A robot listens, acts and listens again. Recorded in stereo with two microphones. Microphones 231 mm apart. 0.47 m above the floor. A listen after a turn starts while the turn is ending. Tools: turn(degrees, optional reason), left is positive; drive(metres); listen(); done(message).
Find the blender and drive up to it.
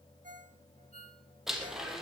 turn(degrees=30)
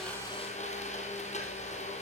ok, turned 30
turn(degrees=150, reason="So it is at 150° left.")
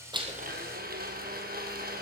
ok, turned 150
turn(degrees=-40, reason="The blender is now 40° right.")
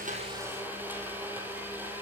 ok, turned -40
turn(degrees=-10, reason="The blender is now 10° right.")
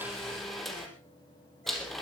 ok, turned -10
drive(metres=1.0)
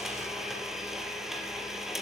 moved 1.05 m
drive(metres=1.0)
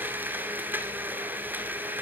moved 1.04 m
turn(degrees=-10, reason="The blender is now 10° right.")
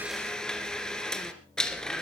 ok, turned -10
drive(metres=1.0)
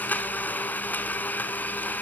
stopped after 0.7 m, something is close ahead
done("Arrived at the blender, straight ahead.")